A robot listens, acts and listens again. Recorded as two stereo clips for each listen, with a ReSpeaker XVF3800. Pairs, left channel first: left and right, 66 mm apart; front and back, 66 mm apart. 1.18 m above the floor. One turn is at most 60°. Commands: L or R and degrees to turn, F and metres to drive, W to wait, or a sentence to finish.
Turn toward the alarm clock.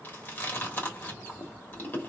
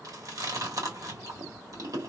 W
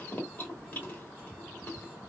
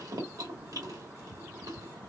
W
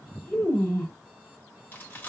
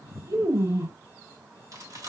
I can't make out an alarm clock to turn to.